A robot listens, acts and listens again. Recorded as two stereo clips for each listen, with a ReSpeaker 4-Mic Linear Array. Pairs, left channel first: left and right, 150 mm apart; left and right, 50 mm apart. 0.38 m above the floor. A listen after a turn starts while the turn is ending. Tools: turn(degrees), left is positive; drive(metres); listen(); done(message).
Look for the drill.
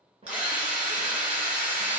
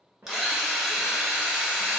turn(degrees=-30)
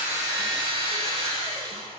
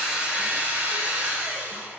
turn(degrees=-140)
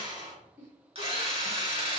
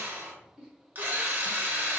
turn(degrees=-45)
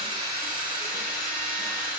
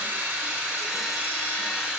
turn(degrees=-15)
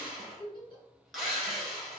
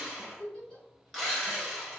done("Facing the drill, under 1 m away.")